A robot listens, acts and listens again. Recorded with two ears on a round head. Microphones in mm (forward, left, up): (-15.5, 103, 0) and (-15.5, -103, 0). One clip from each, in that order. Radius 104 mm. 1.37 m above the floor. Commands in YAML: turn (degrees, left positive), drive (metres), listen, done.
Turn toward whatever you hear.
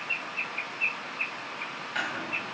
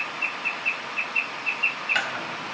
turn: -60
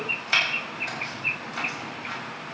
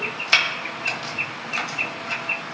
turn: -30
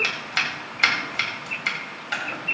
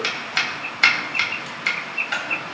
done: "Found it: chopping, straight ahead, 2 to 4 m away."